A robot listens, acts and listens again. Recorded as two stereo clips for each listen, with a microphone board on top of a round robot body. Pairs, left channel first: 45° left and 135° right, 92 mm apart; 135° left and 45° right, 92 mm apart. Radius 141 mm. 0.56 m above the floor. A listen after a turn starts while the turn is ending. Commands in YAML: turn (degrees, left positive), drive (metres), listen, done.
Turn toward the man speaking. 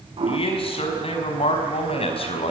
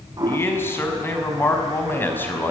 turn: 65
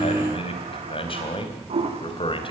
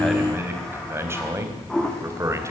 turn: 15
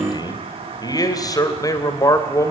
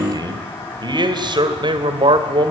turn: -10
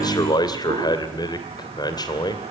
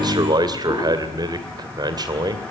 done: "Facing the man speaking."